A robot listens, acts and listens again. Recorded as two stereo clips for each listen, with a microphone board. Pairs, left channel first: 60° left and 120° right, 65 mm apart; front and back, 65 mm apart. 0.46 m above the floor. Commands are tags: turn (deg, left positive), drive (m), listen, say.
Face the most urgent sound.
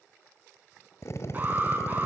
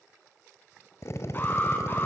<turn deg="-60"/>
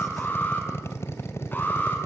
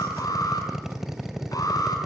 <say>Facing the alarm.</say>